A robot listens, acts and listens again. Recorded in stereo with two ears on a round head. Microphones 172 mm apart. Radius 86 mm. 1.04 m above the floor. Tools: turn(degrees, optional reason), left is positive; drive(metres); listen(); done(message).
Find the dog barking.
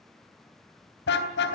listen()
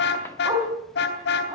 turn(degrees=-20, reason="The dog barking: about 20° right or 160° right.")
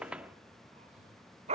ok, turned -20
turn(degrees=-35, reason="The dog barking: about 35° right or 145° right.")
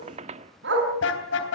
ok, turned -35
turn(degrees=-115, reason="So it is at 115° right.")
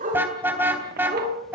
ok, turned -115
turn(degrees=-40, reason="The dog barking is now 40° right.")
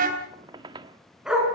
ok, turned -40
done("Facing the dog barking.")